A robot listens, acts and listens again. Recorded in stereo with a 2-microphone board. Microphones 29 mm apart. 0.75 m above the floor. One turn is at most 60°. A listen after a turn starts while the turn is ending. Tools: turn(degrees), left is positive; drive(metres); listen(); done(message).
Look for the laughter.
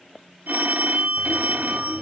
turn(degrees=30)
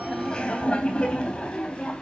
turn(degrees=60)
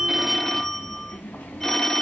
turn(degrees=60)
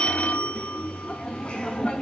turn(degrees=40)
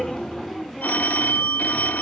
turn(degrees=15)
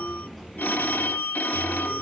done("Found it: laughter, straight ahead.")